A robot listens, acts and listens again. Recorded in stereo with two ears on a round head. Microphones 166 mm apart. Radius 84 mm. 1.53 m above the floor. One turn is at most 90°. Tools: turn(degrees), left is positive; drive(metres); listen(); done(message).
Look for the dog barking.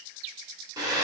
listen()
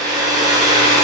listen()
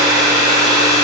done("I can't make out a dog barking to turn to.")